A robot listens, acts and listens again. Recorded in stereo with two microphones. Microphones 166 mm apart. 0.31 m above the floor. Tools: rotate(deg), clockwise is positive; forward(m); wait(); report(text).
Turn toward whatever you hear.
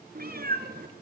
rotate(70)
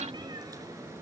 rotate(15)
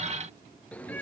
rotate(-10)
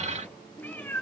rotate(-15)
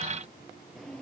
report("Found it: a cat meowing, straight ahead.")